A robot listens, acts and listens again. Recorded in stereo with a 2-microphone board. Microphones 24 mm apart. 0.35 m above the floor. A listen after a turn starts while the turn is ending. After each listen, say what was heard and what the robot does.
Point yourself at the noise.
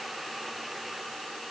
Keep listening.
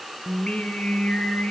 The singing: about 65° left or 115° left. Turn 65° left.
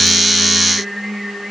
Found it: singing, straight ahead, over 4 m away.